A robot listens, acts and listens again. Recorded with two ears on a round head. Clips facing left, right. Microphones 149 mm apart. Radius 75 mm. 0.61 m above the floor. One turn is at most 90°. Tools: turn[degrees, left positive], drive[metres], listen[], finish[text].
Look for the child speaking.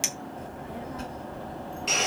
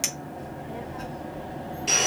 Thought: The child speaking: about 40° left or 140° left.
Action: turn[40]
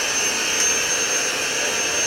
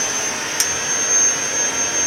Action: listen[]
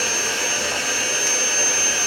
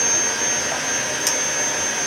Action: listen[]
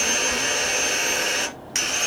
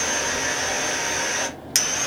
Thought: So it is at 95° left.
Action: turn[90]
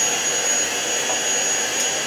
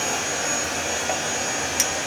Action: listen[]
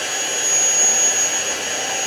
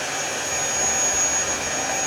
Action: listen[]
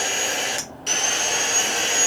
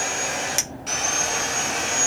Thought: The child speaking is now 15° right.
Action: turn[-15]
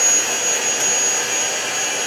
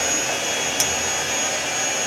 Action: listen[]
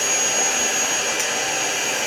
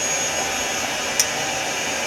Action: listen[]
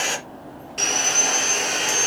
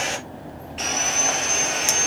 Action: finish[Found it: a child speaking, straight ahead, over 4 m away.]